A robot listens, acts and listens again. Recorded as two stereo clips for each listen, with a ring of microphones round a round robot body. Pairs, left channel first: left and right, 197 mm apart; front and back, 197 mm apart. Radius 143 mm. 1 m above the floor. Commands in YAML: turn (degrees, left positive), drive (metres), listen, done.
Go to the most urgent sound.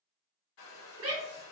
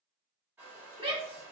turn: -120
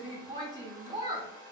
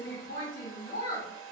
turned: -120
turn: -25
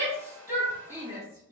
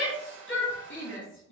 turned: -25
turn: -15
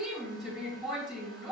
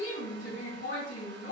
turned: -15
drive: 1.0
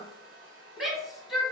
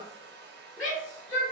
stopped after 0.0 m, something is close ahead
done: "Something is in my way. I am facing the shout but have not reached it."